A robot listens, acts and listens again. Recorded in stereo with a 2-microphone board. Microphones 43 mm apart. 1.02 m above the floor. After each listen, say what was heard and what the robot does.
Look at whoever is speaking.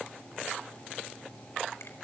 Keep listening.
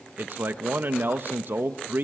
The man speaking: about 50° right or 130° right. Turn 50° right.
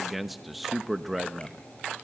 Facing the man speaking.